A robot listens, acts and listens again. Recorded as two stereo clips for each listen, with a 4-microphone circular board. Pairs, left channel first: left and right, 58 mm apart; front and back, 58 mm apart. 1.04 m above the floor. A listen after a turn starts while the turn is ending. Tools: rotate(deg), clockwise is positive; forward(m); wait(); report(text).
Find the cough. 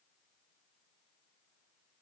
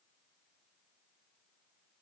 wait()
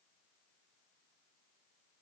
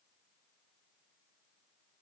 wait()
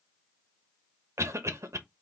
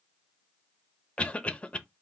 rotate(65)
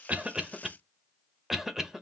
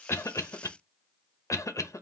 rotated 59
report("Found it: a cough, straight ahead.")